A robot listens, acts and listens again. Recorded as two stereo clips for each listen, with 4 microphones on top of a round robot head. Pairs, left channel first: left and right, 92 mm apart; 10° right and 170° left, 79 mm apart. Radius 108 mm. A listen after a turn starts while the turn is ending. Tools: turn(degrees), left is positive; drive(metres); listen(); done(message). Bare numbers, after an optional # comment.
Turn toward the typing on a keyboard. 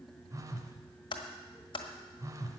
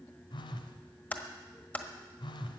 # The typing on a keyboard: 60° left.
turn(60)
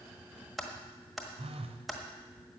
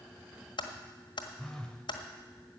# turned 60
done("Found it: typing on a keyboard, straight ahead, 1 to 2 m away.")